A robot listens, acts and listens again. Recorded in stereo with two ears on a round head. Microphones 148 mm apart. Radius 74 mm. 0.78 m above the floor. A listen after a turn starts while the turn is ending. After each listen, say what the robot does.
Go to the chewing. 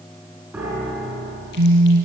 Keep listening.
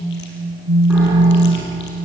Keep listening.
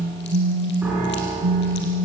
I can't make out chewing, only a piano and a phone buzzing.